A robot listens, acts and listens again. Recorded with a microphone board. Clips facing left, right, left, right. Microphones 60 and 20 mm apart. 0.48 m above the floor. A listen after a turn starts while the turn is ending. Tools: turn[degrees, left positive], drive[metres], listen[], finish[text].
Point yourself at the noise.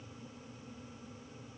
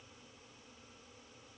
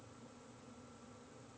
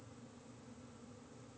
Action: listen[]
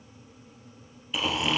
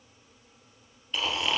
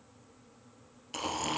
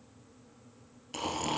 Action: turn[30]
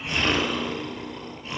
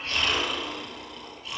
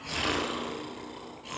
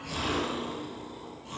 Thought: So it is at 145° left.
Action: turn[145]
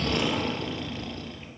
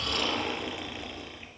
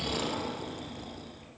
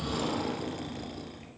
Thought: The snoring is now 15° right.
Action: turn[-15]
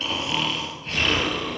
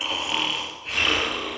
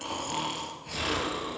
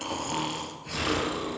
Action: finish[Found it: snoring, straight ahead.]